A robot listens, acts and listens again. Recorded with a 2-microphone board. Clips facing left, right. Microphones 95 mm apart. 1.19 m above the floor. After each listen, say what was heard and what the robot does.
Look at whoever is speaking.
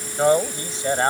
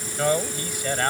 The man speaking: about 25° left or 155° left. Turn 25° left.
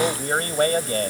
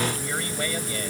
So it is at 130° left. Turn 130° left.
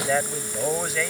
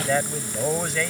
Facing the man speaking.